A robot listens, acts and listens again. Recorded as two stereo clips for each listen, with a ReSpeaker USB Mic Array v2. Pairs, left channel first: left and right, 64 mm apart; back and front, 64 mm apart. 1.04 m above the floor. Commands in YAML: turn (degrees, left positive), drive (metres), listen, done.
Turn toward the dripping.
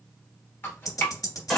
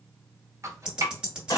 turn: 40
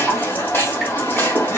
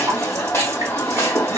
listen: true
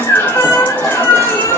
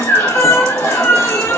listen: true
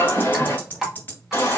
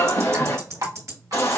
done: "Facing the dripping."